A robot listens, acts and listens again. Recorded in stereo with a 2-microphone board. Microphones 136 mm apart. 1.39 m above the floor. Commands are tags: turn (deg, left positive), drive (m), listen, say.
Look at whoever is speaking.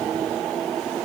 <listen/>
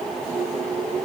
<listen/>
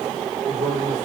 <turn deg="-35"/>
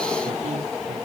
<listen/>
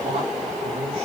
<listen/>
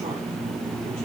<say>I heard a man speaking, but can't make it out now. It was about straight ahead or 110° right.</say>